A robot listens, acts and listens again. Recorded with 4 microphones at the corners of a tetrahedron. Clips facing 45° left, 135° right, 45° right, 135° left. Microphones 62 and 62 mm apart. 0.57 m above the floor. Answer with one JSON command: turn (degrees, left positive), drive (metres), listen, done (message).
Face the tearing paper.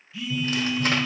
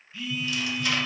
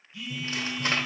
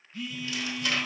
{"done": "Found it: tearing paper, straight ahead."}